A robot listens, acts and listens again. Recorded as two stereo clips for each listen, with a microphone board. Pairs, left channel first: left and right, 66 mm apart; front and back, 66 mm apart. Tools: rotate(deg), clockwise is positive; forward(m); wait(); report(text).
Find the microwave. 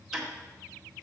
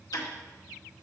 wait()
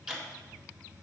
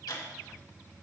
wait()
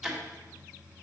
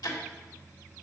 report("I can't make out a microwave to turn to.")